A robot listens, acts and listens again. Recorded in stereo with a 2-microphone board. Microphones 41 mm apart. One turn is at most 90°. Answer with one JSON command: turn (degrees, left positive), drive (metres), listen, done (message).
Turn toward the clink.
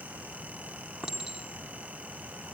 {"turn": -30}
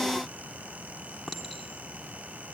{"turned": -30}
{"turn": 15}
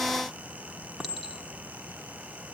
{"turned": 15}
{"done": "Facing the clink."}